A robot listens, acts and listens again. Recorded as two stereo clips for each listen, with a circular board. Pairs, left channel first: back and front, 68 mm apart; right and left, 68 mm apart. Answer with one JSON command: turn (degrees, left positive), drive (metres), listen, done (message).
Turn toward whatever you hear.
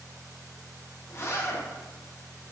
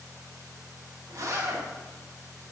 {"turn": 130}
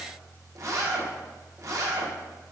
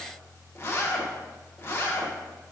{"turn": -35}
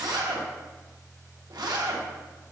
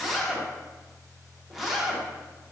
{"done": "Found it: a zipper, straight ahead."}